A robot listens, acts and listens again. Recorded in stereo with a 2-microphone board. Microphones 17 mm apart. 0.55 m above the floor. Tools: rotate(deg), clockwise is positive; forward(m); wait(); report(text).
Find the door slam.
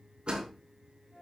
rotate(90)
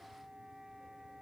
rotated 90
report("Facing where the door slam came from. I can't hear it now.")